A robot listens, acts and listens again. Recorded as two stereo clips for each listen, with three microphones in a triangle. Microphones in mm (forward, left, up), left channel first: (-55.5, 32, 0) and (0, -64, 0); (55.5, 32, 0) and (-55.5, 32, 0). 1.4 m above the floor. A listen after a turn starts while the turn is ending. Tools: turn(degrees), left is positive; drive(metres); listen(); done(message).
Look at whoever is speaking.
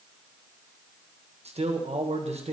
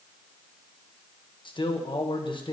turn(degrees=-45)
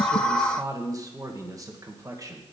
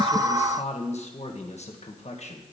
done("Found it: a man speaking, straight ahead, 1 to 2 m away.")